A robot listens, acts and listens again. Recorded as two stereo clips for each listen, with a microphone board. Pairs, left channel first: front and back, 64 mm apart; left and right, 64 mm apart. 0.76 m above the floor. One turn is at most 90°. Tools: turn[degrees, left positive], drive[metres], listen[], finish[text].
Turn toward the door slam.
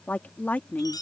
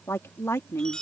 Action: listen[]
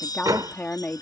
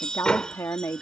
Thought: The door slam: 165° left.
Action: turn[90]
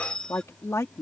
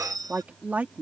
Thought: Nothing new. It was at 75° left.
Action: turn[75]
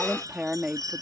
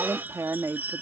Action: finish[I heard a door slam from this way, but can't make it out now.]